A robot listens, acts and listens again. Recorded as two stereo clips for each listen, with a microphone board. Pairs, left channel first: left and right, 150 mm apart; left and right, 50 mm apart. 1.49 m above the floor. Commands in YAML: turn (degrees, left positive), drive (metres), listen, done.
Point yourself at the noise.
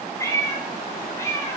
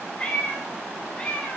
turn: 15
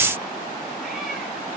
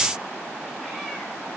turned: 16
listen: true
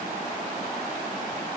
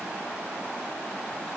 listen: true
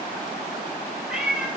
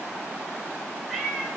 turn: -30
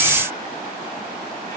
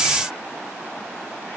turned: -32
listen: true
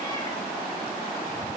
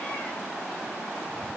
listen: true
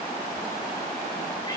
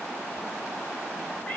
done: "I heard a cat meowing, but can't make it out now. It was about 30° left or 145° right."